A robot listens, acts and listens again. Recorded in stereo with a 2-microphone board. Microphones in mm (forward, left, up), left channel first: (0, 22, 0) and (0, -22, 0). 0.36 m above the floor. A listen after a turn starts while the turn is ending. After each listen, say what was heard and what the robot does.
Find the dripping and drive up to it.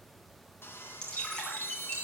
The dripping: about 15° left or 165° left. Turn 15° left.
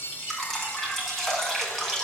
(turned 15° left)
Drive 1.0 m forward.
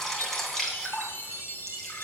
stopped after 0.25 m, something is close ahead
Something is in my way. I am facing the dripping but have not reached it.